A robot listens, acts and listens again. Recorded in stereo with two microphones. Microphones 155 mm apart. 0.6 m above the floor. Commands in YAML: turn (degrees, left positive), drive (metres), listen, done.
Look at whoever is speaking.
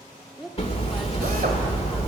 turn: 30
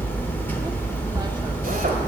listen: true
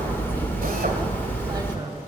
listen: true
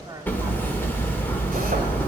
turn: -30
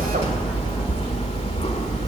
listen: true
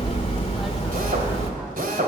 listen: true
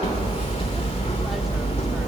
done: "Facing where the woman speaking came from. I can't hear it now."